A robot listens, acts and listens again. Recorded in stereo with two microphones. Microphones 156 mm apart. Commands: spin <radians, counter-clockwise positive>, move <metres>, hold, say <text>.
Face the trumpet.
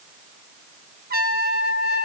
spin -1.57
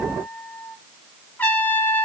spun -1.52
spin 0.17
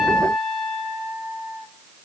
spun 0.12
say Facing the trumpet, 1 to 2 m away.